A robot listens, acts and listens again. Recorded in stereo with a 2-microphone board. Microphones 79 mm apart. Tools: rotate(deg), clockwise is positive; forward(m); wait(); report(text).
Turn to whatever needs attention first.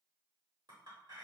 wait()
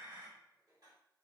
wait()
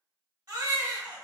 rotate(60)
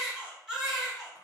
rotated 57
rotate(10)
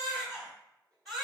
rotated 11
report("Facing the baby crying.")